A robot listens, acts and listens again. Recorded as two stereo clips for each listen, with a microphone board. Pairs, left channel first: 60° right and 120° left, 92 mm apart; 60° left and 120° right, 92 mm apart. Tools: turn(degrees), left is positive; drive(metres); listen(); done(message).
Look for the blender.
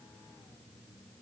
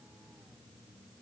listen()
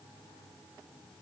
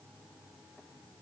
listen()
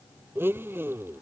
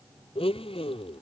turn(degrees=55)
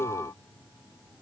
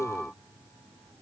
done("Facing the blender.")